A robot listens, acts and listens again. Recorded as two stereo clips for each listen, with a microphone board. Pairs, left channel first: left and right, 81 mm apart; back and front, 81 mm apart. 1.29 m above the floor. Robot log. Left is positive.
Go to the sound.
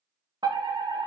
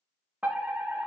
note: The fire alarm: 70° right.
cmd yaw -70
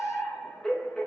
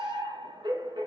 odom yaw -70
note: The fire alarm is now 10° left.
cmd yaw +10
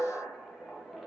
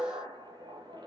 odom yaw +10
cmd fwd 1.0
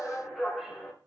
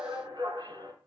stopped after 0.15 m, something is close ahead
end: Blocked. The fire alarm is further on, straight ahead.